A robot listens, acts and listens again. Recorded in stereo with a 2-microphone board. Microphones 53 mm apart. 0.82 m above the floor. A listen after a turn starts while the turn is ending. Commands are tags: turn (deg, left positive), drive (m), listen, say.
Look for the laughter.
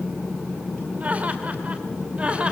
<turn deg="-25"/>
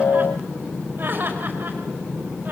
<turn deg="-140"/>
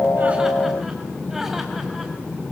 <listen/>
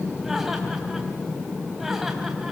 <listen/>
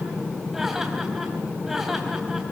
<say>Found it: laughter, straight ahead, over 4 m away.</say>